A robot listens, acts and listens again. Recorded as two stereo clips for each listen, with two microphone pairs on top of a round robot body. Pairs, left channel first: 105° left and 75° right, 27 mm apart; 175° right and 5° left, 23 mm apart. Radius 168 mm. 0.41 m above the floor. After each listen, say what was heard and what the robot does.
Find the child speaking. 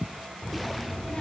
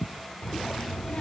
The child speaking: 155° left. Turn 155° left.
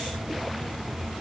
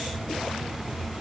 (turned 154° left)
Facing the child speaking, under 1 m away.